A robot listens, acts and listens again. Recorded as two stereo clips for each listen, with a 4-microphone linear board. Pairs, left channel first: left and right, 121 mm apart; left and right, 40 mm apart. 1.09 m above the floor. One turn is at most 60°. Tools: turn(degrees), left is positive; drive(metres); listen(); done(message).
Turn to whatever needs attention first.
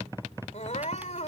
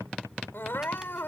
turn(degrees=60)
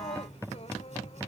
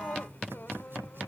turn(degrees=60)
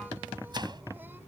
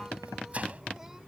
listen()
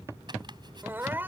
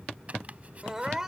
turn(degrees=-15)
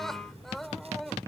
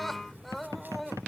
done("Found it: crying, straight ahead.")